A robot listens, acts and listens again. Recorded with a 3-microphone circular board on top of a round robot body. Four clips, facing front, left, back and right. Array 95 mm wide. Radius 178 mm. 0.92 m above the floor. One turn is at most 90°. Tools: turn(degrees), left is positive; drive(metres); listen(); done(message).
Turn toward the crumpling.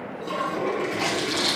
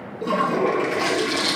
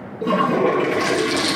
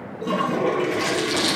turn(degrees=-90)
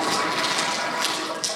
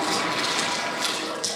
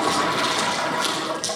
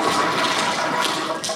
turn(degrees=-45)
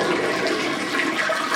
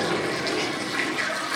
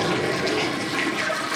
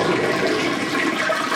done("Facing the crumpling.")